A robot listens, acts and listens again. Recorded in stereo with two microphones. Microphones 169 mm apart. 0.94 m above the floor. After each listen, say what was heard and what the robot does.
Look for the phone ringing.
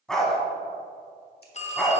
The phone ringing: about 40° left or 140° left. Turn 40° left.
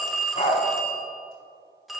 Found it: a phone ringing, straight ahead, under 1 m away.